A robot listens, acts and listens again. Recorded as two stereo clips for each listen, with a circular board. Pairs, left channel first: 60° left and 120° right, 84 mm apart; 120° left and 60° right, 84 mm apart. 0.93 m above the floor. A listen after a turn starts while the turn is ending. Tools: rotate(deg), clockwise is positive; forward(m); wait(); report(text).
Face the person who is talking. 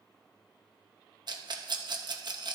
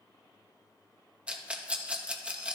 wait()
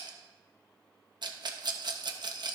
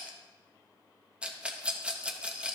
wait()
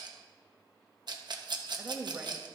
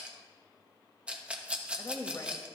rotate(-170)
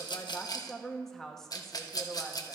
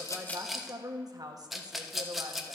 rotate(25)
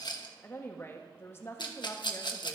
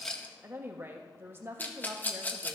report("Found it: a woman speaking, straight ahead.")